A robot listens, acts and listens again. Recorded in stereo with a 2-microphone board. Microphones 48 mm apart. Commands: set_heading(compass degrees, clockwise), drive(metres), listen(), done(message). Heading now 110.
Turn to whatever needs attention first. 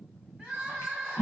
set_heading(140)
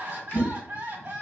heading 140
set_heading(275)
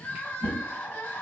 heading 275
set_heading(240)
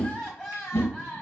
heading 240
done("Facing the crying, 1 to 2 m away.")